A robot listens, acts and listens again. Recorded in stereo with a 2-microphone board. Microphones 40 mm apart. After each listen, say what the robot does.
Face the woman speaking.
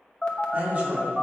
Turn 35° right.
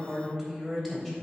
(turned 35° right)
Turn 10° left.
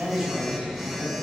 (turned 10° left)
Facing the woman speaking.